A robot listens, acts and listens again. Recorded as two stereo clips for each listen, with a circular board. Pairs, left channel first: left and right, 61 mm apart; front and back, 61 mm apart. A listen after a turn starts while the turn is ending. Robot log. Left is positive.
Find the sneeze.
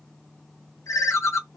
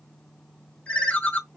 cmd idle
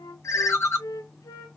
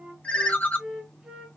cmd idle
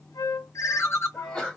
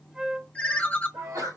note: The sneeze: 170° left.
cmd yaw +170
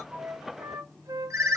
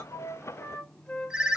end: Facing where the sneeze came from. I can't hear it now.